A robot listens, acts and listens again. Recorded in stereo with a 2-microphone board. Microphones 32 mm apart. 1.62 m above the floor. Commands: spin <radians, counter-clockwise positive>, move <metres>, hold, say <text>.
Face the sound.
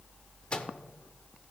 spin 0.61
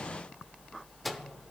say Found it: a microwave, straight ahead, under 1 m away.